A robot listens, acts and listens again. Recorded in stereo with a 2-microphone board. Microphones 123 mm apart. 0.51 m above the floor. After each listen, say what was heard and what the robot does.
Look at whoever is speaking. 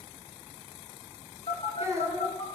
The child speaking: about 25° right or 155° right. Turn 25° right.
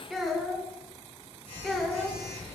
Found it: a child speaking, straight ahead.